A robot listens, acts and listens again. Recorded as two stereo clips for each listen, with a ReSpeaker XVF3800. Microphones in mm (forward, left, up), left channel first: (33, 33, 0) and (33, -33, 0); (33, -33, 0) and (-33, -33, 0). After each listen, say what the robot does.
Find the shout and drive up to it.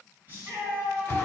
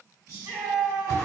Turn 145° right.
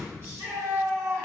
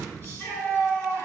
Turn 45° right.
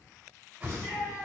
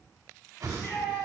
Turn 25° left.
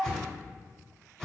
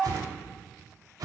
Drive 1.0 m forward.
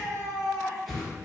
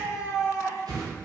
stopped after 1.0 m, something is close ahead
Arrived at the shout, straight ahead.